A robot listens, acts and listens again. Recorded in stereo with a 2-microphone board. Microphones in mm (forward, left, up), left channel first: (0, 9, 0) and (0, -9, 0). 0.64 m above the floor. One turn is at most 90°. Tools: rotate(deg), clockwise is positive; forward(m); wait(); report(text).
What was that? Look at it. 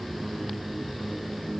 wait()
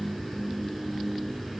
wait()
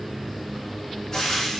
rotate(-35)
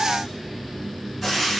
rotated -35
report("Found it: frying, straight ahead, over 4 m away.")